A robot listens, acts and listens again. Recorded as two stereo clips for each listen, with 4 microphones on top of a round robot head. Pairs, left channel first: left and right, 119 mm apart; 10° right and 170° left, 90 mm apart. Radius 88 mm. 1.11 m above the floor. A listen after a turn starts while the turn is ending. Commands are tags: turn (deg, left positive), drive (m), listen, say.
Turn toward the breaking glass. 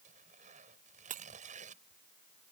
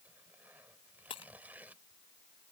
<turn deg="-60"/>
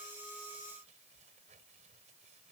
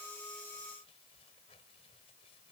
<say>Facing where the breaking glass came from. I can't hear it now.</say>